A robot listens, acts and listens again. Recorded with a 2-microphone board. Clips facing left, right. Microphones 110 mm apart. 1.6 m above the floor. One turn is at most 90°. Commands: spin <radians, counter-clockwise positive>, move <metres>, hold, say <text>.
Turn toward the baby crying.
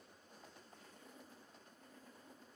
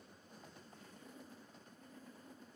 hold
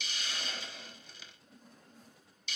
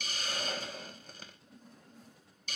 hold
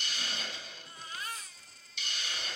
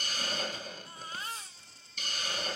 spin -0.52
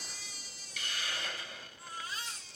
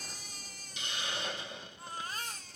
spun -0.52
spin -1.57
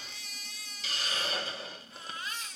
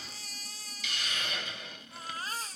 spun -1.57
spin -0.87
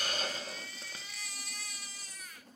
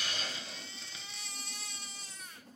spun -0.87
spin -0.61
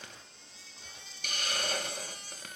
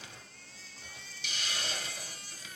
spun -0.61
spin 0.44
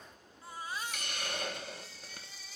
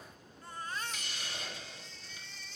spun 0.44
spin 0.17
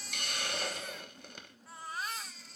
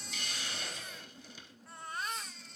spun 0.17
say Facing the baby crying, 1 to 2 m away.